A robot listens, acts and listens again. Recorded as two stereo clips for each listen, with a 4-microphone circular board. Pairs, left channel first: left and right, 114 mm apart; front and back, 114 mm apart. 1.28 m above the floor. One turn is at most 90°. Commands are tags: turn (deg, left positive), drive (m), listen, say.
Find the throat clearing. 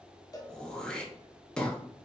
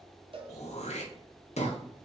<turn deg="10"/>
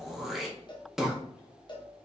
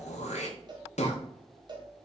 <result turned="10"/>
<say>Facing the throat clearing.</say>